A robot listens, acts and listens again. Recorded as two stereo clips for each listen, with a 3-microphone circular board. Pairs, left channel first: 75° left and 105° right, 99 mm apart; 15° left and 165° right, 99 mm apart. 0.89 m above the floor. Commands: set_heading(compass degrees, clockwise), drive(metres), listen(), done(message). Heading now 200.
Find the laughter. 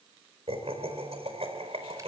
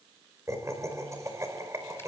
set_heading(305)
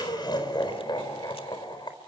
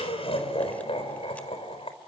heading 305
set_heading(270)
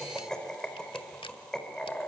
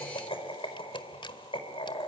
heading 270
set_heading(280)
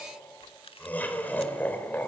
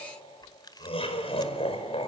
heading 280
done("Facing the laughter, over 4 m away.")